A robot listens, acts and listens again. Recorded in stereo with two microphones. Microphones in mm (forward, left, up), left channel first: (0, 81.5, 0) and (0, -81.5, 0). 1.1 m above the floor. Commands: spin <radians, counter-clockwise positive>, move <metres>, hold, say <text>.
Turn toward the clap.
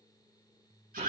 hold
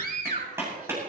spin -0.26
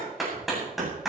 say Found it: a clap, straight ahead.